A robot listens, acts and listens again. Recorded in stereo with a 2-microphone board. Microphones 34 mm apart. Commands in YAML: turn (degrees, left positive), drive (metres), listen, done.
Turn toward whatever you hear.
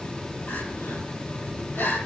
turn: 90
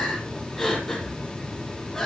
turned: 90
done: "Found it: crying, straight ahead."